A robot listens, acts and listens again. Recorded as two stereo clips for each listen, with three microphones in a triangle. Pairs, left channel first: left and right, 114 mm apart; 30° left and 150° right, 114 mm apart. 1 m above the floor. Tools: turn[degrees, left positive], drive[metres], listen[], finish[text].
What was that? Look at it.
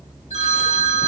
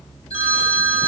Thought: The phone ringing: 70° left.
Action: turn[70]
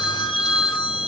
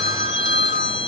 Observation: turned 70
Action: finish[Facing the phone ringing, 1 to 2 m away.]